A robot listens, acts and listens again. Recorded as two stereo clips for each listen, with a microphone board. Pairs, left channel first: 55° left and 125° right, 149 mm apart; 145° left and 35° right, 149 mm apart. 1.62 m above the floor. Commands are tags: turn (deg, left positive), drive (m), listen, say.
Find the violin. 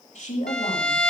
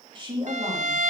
<turn deg="-30"/>
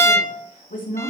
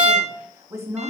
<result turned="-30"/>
<turn deg="-15"/>
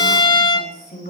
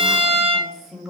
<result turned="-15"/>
<say>Facing the violin, 1 to 2 m away.</say>